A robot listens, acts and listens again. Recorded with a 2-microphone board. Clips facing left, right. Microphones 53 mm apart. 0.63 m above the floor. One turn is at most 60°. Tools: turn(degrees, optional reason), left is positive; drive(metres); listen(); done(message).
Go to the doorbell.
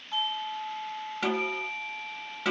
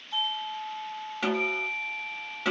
turn(degrees=45, reason="The doorbell: about 45° left or 135° left.")
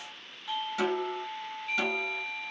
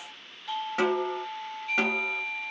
turn(degrees=10, reason="So it is at 10° left.")
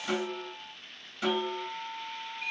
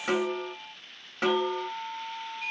drive(metres=1.0)
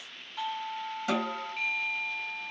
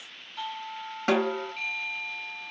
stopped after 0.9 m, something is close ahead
done("Arrived at the doorbell, straight ahead.")